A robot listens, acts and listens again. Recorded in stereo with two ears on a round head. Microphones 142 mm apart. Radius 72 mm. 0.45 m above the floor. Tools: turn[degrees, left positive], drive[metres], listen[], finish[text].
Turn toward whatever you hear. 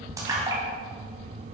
Thought: The splash: about 20° right or 160° right.
Action: turn[-20]
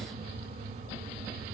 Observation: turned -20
Action: listen[]
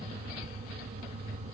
Action: finish[I heard a splash, but can't make it out now. It was about straight ahead or 140° right.]